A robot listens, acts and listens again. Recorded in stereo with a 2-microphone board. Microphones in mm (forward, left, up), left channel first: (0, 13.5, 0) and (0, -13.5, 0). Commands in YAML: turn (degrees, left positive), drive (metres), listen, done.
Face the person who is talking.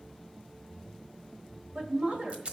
turn: -50
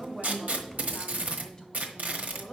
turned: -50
turn: 25
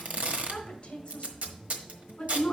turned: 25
turn: 35
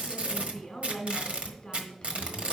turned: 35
turn: 20
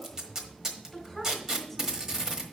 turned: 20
done: "Facing the woman speaking, 1 to 2 m away."